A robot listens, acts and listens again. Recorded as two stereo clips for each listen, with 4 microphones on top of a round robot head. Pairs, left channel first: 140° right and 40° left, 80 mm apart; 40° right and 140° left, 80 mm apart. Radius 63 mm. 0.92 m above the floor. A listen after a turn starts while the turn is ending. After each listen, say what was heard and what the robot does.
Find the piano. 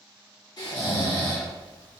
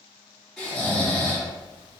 Keep listening.
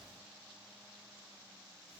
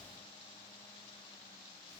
Keep listening.
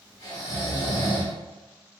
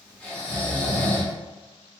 I can't make out a piano, only snoring.